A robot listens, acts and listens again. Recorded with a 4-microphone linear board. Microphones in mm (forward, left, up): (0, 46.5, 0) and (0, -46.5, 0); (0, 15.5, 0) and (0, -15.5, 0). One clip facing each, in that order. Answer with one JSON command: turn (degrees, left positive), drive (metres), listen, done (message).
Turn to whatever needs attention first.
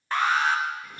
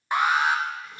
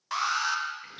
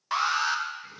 {"turn": -30}
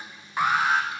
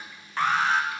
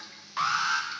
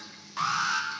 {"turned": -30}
{"turn": 15}
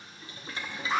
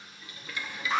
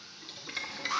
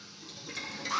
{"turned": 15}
{"done": "Facing the alarm, under 1 m away."}